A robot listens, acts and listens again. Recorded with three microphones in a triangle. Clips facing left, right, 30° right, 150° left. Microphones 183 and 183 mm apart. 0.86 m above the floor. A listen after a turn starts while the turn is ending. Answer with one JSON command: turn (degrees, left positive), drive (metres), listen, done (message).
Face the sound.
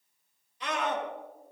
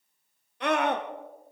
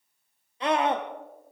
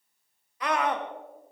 {"turn": -90}
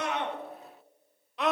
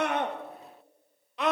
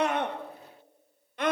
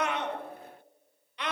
{"done": "Facing the scream."}